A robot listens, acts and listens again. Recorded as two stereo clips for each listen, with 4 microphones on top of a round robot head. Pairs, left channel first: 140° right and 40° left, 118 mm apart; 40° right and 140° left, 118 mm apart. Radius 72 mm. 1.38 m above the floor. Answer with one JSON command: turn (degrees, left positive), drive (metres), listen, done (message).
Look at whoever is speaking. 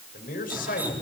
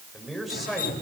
{"turn": -130}
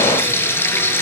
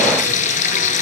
{"listen": true}
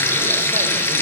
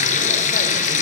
{"listen": true}
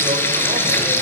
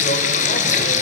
{"done": "I heard a man speaking from this way, but can't make it out now."}